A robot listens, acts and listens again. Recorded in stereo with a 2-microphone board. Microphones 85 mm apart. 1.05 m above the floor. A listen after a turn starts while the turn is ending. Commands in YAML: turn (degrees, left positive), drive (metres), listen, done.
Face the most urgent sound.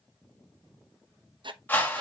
listen: true
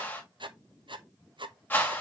listen: true
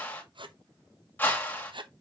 done: "I can't make out anything urgent to turn to."